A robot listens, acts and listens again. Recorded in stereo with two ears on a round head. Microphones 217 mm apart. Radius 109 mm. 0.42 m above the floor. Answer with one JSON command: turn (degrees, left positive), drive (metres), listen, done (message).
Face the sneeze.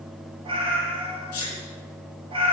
{"turn": 90}
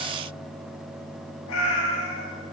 {"done": "Facing where the sneeze came from. I can't hear it now."}